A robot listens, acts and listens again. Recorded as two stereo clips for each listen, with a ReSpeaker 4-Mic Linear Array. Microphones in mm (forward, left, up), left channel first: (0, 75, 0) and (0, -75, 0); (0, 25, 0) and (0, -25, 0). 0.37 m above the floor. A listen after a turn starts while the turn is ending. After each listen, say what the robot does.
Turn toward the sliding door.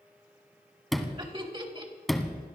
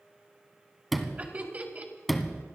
Turn 30° left.
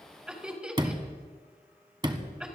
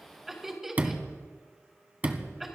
Turn 30° right.
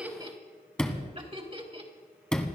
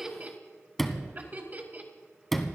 Found it: a sliding door, straight ahead, 1 to 2 m away.